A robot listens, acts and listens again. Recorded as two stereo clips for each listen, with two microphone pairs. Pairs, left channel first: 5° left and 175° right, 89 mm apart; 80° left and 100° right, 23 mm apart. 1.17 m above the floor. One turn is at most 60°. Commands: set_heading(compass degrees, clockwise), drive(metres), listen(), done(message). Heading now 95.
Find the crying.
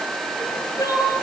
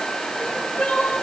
set_heading(45)
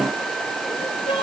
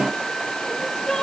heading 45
set_heading(35)
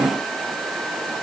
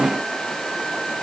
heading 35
listen()
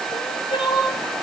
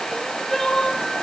done("Facing the crying, over 4 m away.")